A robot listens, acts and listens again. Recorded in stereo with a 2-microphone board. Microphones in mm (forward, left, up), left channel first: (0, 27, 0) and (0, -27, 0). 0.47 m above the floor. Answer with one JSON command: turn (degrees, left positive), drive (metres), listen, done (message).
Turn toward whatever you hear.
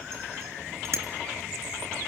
{"turn": -60}
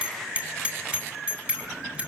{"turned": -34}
{"turn": -25}
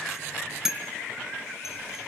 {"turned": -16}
{"turn": -10}
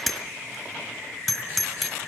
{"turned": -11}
{"done": "Found it: a bicycle bell, straight ahead."}